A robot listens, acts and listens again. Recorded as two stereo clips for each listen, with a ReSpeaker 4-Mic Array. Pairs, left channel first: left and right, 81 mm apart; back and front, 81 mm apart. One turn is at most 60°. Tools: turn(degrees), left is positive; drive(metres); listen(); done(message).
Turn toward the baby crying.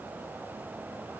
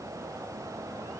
listen()
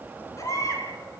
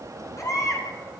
turn(degrees=60)
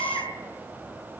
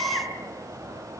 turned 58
turn(degrees=60)
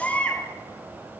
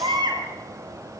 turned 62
turn(degrees=15)
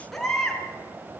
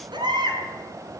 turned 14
done("Found it: a baby crying, straight ahead.")